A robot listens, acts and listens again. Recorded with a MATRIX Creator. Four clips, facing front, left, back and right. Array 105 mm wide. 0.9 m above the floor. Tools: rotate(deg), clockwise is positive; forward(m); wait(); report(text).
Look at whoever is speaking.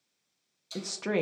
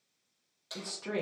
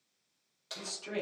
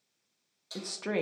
rotate(30)
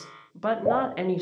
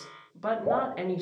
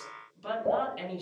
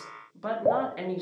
report("Found it: a woman speaking, straight ahead.")